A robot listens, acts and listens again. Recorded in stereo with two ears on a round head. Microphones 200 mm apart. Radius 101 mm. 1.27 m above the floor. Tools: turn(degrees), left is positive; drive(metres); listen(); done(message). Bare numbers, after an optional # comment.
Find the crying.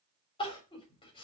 # The crying: about 25° left or 155° left.
turn(25)
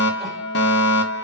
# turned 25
listen()
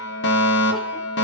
listen()
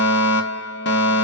done("I heard crying, but can't make it out now. It was about straight ahead or 130° left.")